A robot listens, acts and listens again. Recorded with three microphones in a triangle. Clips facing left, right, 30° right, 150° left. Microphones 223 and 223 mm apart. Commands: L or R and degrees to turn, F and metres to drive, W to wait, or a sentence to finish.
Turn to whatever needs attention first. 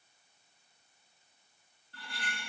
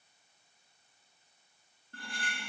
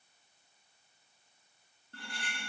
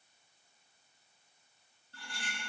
W
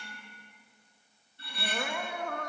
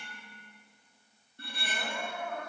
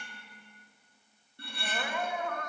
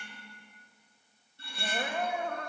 L95
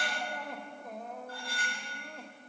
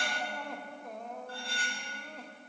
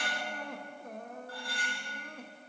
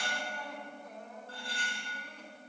Facing the crying, 1 to 2 m away.